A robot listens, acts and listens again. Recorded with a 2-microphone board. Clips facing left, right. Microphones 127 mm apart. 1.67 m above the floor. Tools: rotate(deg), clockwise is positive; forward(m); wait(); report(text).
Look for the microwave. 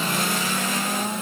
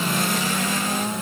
wait()
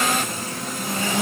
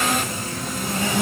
wait()
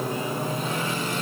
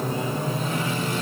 report("I can't make out a microwave.")